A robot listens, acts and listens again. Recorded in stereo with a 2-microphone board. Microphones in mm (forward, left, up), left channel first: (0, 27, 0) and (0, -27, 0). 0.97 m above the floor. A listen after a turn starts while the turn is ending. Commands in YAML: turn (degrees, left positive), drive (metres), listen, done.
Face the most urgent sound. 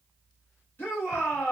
turn: 40
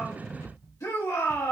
turn: 100
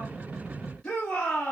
turn: 15
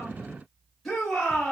done: "Found it: a shout, straight ahead."